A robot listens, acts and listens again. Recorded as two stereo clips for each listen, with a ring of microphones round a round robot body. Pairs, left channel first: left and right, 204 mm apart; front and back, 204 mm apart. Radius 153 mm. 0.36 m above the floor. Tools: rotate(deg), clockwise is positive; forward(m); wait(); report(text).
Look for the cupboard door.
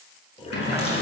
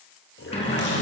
rotate(-60)
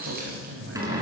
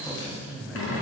rotate(15)
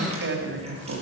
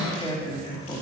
wait()
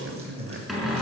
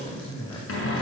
report("Facing the cupboard door, over 4 m away.")